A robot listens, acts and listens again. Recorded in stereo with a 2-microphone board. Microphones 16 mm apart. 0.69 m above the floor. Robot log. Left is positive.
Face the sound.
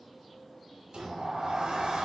cmd yaw -90
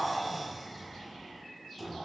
end: Facing the sliding door.